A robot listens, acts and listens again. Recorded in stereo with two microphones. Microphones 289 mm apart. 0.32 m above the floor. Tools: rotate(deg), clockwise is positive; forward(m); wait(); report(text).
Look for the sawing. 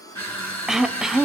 wait()
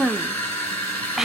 wait()
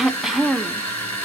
report("I can't make out sawing, only throat clearing and crushing.")